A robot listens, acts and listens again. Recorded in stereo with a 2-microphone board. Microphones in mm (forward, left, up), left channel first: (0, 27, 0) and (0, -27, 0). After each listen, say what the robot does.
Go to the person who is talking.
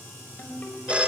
Keep listening.
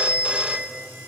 Keep listening.
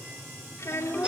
Turn 65° left.
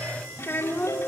Turn 45° left.
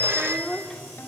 Turn 10° left.
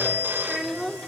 Drive 1.0 m forward.
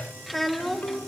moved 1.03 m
Drive 1.0 m forward.
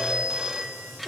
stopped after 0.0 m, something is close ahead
I am next to the child speaking.